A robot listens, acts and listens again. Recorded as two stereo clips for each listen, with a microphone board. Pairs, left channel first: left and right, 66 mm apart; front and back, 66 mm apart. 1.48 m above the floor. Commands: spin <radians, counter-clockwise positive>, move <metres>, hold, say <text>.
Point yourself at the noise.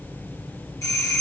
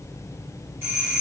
spin 2.27
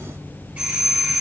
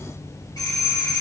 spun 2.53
spin -0.35
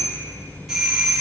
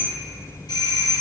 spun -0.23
say Found it: a doorbell, straight ahead.